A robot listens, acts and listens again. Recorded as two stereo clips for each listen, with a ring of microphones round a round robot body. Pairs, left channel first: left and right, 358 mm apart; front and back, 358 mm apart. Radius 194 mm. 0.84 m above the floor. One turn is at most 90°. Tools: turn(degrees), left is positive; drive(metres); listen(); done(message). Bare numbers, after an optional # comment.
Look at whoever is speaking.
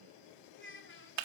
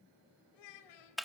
# The child speaking: 30° left.
turn(30)
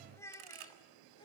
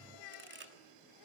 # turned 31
# The child speaking is now 10° left.
turn(10)
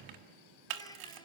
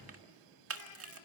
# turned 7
listen()
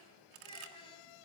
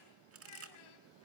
# The child speaking is now 15° left.
turn(15)
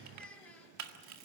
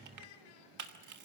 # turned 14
done("Facing the child speaking, 2 to 4 m away.")